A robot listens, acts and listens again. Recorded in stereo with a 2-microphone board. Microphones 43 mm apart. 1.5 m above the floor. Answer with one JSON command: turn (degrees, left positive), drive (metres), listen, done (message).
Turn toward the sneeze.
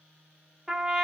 {"listen": true}
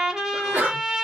{"turn": -50}
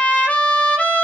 {"listen": true}
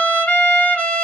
{"done": "I heard a sneeze, but can't make it out now. It was about straight ahead or 80° right."}